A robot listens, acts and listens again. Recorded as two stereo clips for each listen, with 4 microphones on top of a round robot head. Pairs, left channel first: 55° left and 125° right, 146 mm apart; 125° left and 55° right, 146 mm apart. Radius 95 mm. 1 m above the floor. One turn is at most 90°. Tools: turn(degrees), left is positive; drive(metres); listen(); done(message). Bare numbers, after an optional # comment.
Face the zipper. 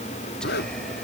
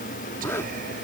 # The zipper: 50° left.
turn(50)
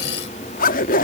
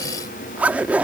# The zipper is now 25° left.
turn(25)
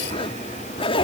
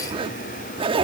done("Facing the zipper.")